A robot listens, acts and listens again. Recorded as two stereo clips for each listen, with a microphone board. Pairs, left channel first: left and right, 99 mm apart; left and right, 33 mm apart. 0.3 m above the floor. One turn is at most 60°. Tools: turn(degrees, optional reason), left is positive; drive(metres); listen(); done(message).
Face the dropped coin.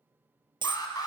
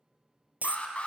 turn(degrees=-55, reason="The dropped coin: about 55° right or 125° right.")
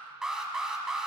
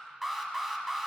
listen()
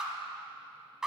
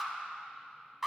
done("I heard a dropped coin, but can't make it out now. It was about straight ahead or 70° right.")